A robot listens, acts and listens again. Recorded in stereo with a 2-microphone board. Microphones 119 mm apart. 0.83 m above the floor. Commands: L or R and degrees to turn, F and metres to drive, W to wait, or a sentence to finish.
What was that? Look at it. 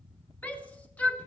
L30
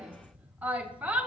R15
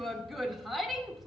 Found it: a shout, straight ahead, under 1 m away.